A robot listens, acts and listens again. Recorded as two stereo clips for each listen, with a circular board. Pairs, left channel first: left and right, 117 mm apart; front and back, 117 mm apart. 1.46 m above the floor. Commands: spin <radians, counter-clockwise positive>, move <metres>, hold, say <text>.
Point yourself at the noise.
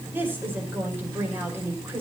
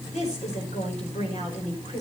spin -0.35
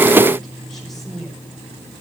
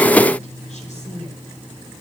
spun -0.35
say Found it: a woman speaking, straight ahead, over 4 m away.